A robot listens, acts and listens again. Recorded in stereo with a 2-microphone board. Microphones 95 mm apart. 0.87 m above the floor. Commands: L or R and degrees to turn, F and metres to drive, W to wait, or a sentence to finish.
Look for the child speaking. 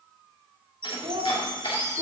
R65
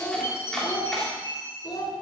L50
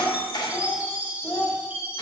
L25
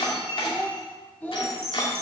L15
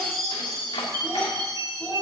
W
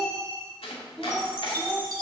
Facing the child speaking.